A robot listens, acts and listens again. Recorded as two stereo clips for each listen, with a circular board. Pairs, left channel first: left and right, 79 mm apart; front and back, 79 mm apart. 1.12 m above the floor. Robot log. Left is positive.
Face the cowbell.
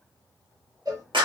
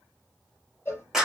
note: The cowbell: 55° right.
cmd yaw -55
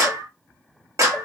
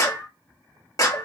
cmd idle
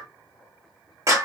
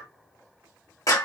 cmd idle
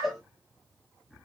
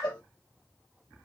end: Found it: a cowbell, straight ahead.